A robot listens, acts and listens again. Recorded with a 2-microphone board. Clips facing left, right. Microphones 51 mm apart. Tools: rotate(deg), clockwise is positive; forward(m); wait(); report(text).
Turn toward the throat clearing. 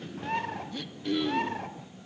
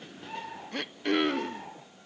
rotate(55)
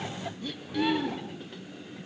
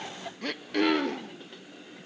rotate(70)
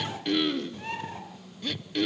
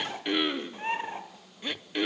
rotate(20)
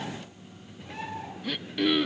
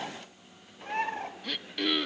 report("Found it: throat clearing, straight ahead.")